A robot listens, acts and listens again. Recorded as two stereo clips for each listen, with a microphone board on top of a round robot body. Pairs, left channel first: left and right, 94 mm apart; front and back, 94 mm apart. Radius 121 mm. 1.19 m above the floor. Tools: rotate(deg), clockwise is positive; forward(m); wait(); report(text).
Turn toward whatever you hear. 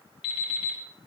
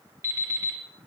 rotate(-120)
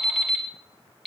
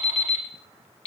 report("Facing the alarm clock, 2 to 4 m away.")